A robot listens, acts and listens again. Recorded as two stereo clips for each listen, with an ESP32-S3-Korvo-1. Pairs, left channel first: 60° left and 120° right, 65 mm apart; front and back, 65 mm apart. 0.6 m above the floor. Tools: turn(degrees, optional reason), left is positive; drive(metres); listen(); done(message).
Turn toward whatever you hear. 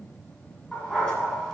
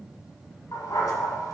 turn(degrees=-20, reason="The dog barking: 20° right.")
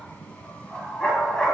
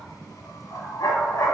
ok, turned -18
turn(degrees=-20, reason="The dog barking is now 20° right.")
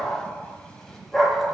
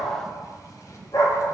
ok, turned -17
turn(degrees=-30, reason="The dog barking is now 30° right.")
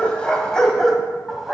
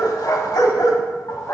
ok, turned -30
turn(degrees=-30, reason="The dog barking is now 30° right.")
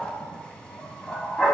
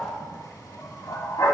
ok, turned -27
turn(degrees=-15, reason="The dog barking is now 15° right.")
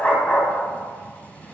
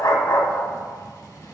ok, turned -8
done("Facing the dog barking, 1 to 2 m away.")